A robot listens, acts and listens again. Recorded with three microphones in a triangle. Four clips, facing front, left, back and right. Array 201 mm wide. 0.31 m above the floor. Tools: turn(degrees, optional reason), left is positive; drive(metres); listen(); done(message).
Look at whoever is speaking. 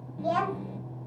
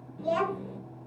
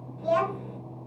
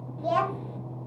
turn(degrees=-60, reason="The child speaking: 60° right.")
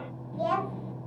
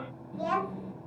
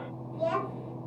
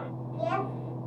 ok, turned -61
done("Facing the child speaking, 1 to 2 m away.")